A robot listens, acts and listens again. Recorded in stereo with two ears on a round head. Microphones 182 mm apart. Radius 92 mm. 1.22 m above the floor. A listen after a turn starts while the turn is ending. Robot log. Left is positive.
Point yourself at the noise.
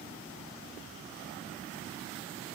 cmd idle
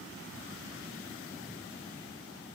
cmd idle
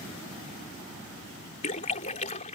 note: The splash: about 35° left or 145° left.
cmd yaw +35
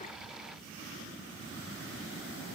cmd idle
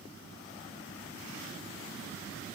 end: I heard a splash, but can't make it out now. It was about straight ahead or 110° left.